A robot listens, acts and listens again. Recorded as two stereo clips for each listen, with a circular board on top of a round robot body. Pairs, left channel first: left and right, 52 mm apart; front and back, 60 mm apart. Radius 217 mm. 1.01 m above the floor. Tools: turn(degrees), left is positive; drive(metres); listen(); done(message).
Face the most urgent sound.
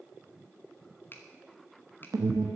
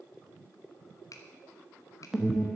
turn(degrees=-95)
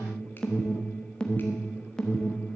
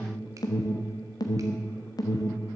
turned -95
turn(degrees=15)
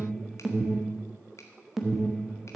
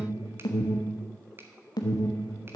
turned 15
done("Found it: an alarm, straight ahead.")